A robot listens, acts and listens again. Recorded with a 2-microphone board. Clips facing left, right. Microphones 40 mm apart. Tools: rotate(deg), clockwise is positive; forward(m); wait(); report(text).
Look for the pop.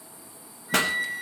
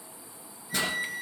rotate(-70)
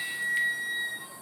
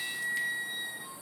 wait()
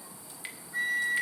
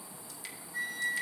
report("I heard a pop, but can't make it out now. It was about straight ahead or 40° left.")